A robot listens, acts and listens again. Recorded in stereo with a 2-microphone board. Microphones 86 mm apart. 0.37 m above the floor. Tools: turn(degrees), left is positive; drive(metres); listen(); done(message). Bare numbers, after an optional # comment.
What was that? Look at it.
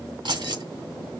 # The keys jangling: about 70° right or 110° right.
turn(-70)
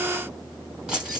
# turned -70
# So it is at 10° right.
turn(-10)
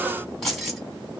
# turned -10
done("Found it: keys jangling, straight ahead.")